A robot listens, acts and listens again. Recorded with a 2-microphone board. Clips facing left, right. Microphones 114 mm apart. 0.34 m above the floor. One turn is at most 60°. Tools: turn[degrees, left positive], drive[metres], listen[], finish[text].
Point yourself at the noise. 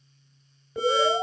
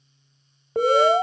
Thought: The alarm: about 55° right or 125° right.
Action: turn[-55]
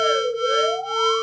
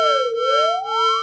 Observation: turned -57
Thought: So it is at 45° right.
Action: turn[-45]
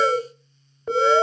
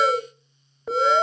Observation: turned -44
Action: finish[Facing the alarm, 1 to 2 m away.]